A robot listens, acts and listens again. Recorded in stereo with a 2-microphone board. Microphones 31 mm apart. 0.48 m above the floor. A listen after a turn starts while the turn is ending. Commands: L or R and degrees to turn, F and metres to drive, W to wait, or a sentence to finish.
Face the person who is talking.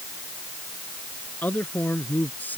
L65
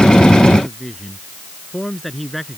Facing the man speaking.